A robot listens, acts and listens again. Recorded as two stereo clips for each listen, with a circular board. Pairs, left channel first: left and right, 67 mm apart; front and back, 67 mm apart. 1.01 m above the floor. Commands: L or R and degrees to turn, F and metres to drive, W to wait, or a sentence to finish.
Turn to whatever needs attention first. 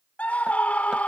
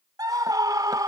L160
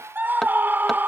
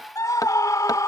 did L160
R30
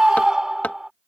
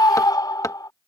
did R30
R10
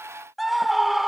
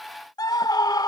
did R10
Found it: a scream, straight ahead.